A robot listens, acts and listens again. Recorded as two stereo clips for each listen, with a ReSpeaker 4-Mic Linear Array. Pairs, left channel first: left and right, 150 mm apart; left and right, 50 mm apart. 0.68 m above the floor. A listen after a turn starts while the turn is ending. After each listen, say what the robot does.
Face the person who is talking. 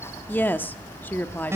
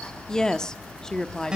Turn 30° left.
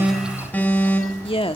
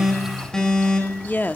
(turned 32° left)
Turn 135° left.
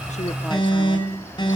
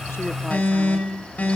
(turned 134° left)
Keep listening.
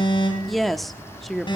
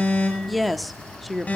Found it: a woman speaking, straight ahead.